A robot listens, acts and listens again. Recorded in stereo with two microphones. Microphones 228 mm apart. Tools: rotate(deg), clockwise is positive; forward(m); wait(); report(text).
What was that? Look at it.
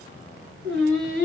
rotate(60)
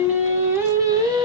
rotate(20)
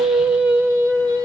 rotate(20)
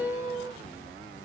rotate(15)
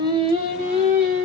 rotate(30)
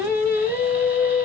rotate(10)
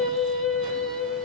report("Found it: singing, straight ahead.")